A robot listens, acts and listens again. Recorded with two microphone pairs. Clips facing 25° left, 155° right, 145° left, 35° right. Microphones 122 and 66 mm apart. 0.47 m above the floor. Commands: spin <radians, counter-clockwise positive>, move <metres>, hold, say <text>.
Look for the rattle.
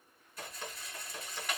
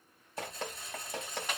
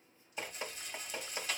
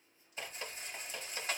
spin -1.57
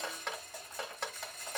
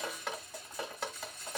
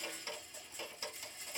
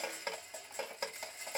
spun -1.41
spin -0.17
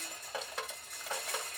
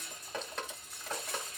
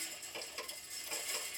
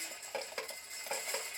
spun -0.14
say Facing the rattle, 1 to 2 m away.